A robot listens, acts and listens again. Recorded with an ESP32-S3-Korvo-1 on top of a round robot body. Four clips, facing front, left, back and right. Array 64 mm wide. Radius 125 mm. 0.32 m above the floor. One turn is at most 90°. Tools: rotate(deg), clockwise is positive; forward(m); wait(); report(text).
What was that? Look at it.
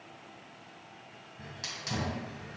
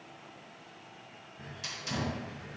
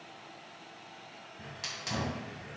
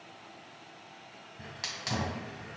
rotate(90)
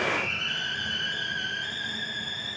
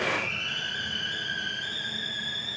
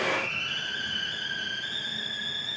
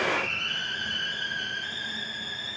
rotate(20)
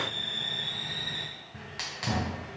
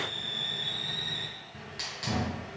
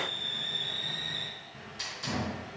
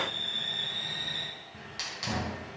report("Facing the hiss, 1 to 2 m away.")